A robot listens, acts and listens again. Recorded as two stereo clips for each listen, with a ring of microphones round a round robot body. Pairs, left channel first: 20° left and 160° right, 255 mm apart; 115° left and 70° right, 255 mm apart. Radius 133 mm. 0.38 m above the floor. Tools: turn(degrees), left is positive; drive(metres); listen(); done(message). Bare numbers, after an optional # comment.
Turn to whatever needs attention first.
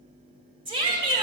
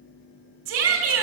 # The shout: 90° right.
turn(-90)
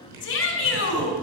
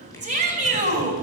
# The shout is now 10° right.
turn(-10)
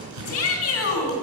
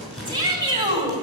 done("Found it: a shout, straight ahead.")